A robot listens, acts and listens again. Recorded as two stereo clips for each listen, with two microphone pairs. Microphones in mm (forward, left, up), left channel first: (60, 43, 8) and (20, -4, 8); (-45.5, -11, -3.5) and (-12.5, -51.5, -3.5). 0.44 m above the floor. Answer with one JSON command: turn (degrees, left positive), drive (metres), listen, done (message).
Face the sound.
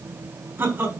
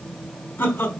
{"turn": 170}
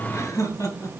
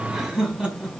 {"turn": 20}
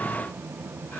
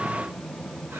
{"listen": true}
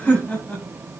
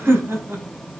{"turn": -20}
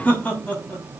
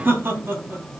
{"turn": -15}
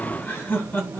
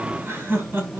{"turn": -10}
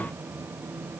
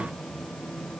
{"listen": true}
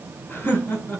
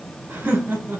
{"done": "Found it: laughter, straight ahead, 2 to 4 m away."}